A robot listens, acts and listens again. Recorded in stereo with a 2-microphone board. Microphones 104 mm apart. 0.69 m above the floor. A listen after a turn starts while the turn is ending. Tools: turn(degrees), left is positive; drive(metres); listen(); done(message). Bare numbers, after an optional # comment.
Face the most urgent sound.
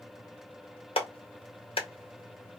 listen()
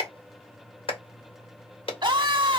# The scream: about 50° right or 130° right.
turn(-50)
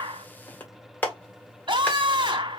# So it is at 70° right.
turn(-70)
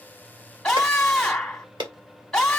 done("Found it: a scream, straight ahead, 1 to 2 m away.")